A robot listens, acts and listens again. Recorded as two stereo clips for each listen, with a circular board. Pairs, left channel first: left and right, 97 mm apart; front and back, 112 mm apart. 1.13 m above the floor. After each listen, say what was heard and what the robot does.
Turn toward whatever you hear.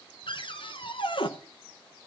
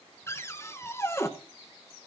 The cupboard door: 65° left. Turn 65° left.
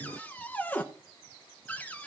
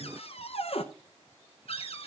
The cupboard door is now 15° left. Turn 15° left.
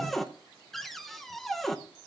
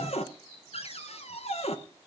Found it: a cupboard door, straight ahead, under 1 m away.